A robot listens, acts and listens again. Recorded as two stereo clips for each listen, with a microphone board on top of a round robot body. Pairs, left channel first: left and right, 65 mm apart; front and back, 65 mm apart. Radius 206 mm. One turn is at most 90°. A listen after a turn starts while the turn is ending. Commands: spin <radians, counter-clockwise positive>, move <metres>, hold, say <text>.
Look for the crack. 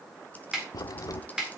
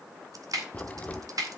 spin 1.13
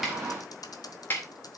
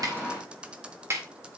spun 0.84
spin 0.35
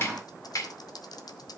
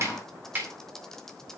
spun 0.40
say I heard a crack from this way, but can't make it out now.